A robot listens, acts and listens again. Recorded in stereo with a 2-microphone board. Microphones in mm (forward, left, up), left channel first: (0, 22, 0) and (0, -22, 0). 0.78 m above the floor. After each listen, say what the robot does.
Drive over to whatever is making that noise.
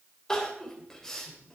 Turn 30° left.
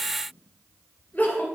Turn 135° left.
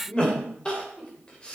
Turn 20° left.
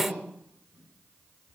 Drive 1.0 m forward.
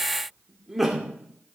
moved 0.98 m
Drive 1.0 m forward.
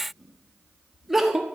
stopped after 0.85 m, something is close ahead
Arrived at the crying, straight ahead.